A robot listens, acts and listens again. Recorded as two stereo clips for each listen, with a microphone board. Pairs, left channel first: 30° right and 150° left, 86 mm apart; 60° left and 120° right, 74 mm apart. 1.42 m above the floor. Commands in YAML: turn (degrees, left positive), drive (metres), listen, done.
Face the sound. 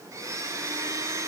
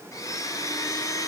turn: 100
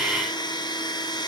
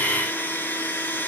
done: "Found it: a blender, straight ahead."